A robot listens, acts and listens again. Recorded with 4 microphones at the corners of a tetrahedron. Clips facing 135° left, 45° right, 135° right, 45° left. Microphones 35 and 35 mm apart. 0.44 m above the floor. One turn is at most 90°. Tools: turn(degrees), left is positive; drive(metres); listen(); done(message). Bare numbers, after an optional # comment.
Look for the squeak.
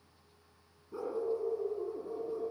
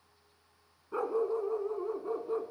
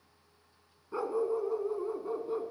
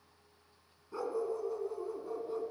listen()
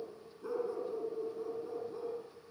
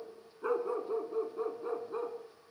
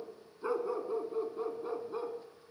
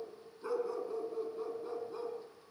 listen()
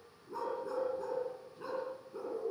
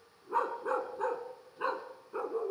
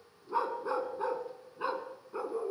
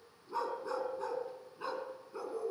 done("I can't make out a squeak, only a dog barking.")